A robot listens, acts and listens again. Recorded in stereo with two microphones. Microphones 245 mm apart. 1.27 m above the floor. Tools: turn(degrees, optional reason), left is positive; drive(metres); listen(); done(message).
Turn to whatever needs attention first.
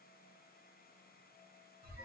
listen()
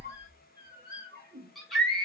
turn(degrees=30)
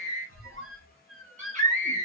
turn(degrees=-30, reason="So it is at 30° right.")
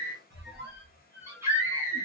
turn(degrees=-10, reason="The scream is now 10° right.")
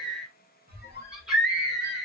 done("Facing the scream, 1 to 2 m away.")